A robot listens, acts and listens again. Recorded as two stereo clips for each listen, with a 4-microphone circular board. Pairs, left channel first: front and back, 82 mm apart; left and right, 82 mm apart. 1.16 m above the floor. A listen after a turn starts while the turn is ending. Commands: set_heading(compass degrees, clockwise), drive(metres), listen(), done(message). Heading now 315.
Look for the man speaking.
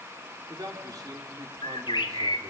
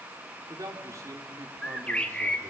set_heading(95)
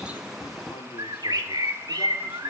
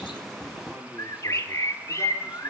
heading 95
listen()
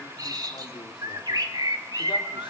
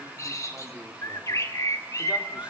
listen()
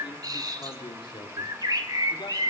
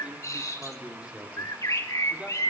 set_heading(110)
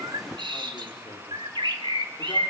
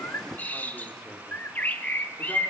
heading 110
listen()
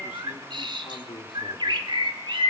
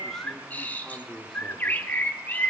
done("Found it: a man speaking, straight ahead.")